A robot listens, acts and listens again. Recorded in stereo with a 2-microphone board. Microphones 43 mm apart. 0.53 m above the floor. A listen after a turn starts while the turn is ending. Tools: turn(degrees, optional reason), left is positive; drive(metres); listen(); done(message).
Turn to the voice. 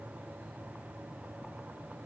listen()
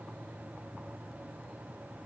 listen()
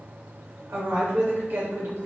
turn(degrees=-60, reason="The woman speaking: about 60° right or 120° right.")
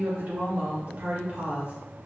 turn(degrees=-50, reason="So it is at 50° right.")
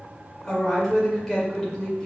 turn(degrees=15, reason="The woman speaking is now 15° left.")
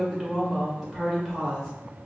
done("Facing the woman speaking, 1 to 2 m away.")